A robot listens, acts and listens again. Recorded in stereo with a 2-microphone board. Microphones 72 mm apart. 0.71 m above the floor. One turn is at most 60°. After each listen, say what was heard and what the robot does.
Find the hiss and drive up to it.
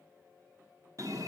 Keep listening.
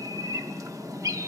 Keep listening.
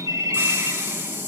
The hiss: about 40° right or 140° right. Turn 40° right.
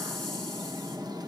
Keep listening.
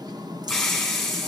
Drive 1.0 m forward.
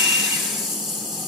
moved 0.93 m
Drive 1.0 m forward.
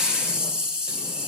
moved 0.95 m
The hiss is now 15° right. Turn 15° right.
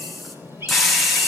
Drive 1.0 m forward.
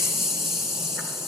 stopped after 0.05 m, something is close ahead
I am next to the hiss.